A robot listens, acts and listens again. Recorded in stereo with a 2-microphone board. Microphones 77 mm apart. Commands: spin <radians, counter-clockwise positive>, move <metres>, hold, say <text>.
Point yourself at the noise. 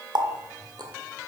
spin -1.22
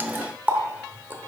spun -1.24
spin -0.44
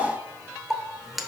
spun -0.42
say Facing the running tap, under 1 m away.